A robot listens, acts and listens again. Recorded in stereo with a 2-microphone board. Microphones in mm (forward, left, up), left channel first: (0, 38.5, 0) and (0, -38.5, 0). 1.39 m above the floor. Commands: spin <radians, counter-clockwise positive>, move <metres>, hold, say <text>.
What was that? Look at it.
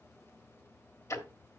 spin 0.70
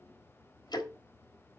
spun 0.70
spin 1.57
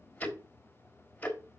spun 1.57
spin 0.44
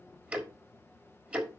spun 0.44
spin -0.35
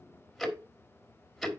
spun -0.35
say Found it: ticking, straight ahead.